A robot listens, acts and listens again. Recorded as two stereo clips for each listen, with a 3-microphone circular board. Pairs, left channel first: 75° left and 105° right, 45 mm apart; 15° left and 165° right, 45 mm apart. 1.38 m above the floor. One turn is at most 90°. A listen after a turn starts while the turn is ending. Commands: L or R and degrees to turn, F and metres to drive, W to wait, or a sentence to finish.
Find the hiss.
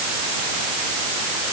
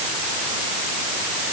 W
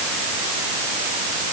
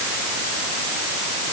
W
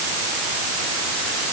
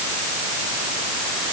I can't make out a hiss to turn to.